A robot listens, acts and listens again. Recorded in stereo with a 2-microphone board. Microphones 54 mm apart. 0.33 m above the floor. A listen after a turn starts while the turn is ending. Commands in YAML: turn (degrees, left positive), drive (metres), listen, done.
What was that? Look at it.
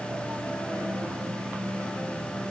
listen: true
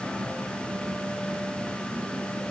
listen: true
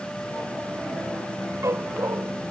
turn: -60
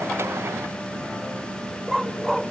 done: "Found it: a dog barking, straight ahead."